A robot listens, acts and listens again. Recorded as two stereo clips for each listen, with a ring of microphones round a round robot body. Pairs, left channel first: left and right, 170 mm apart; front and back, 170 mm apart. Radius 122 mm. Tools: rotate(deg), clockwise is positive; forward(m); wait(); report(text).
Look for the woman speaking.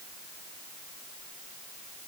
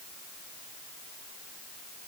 wait()
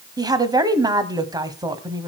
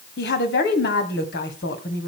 rotate(25)
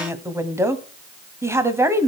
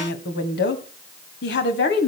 rotate(15)
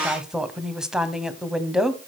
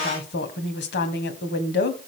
report("Facing the woman speaking, 2 to 4 m away.")